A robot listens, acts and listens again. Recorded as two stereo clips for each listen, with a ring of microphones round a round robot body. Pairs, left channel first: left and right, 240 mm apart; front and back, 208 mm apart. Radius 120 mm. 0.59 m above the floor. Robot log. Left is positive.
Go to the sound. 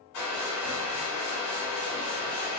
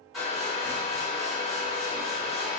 note: The hair dryer: 90° left.
cmd yaw +90
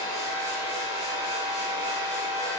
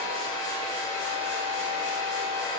note: The hair dryer is now 15° right.
cmd yaw -15
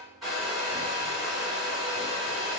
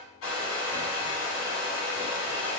cmd fwd 1.0
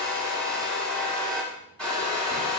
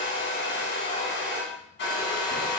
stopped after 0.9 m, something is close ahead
end: I am next to the hair dryer.